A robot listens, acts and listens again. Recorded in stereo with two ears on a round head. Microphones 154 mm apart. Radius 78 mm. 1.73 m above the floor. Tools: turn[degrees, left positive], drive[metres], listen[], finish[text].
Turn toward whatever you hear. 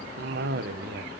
Thought: The cough: about 60° right or 120° right.
Action: turn[-60]
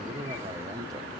Thought: So it is at 25° right.
Action: turn[-25]
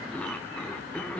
Thought: The cough is now 10° left.
Action: turn[10]
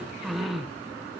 Action: finish[Facing the cough, 1 to 2 m away.]